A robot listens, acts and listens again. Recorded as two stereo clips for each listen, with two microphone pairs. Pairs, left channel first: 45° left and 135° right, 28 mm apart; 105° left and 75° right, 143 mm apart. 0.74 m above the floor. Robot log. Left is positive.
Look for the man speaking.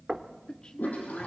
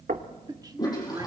note: The man speaking: 15° right.
cmd yaw -15
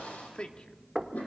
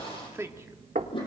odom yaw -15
end: Facing the man speaking, 1 to 2 m away.